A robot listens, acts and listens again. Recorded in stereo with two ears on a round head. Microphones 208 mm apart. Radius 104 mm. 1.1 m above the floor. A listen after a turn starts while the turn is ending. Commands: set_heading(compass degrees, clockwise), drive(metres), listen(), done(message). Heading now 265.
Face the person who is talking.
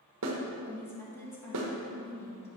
set_heading(235)
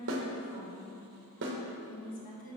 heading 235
set_heading(95)
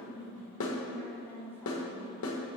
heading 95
set_heading(85)
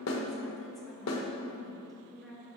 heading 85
done("Found it: a woman speaking, straight ahead, 1 to 2 m away.")